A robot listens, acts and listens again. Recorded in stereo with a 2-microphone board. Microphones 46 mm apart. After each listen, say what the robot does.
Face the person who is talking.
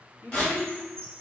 Turn 70° left.
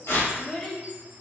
Found it: a child speaking, straight ahead, under 1 m away.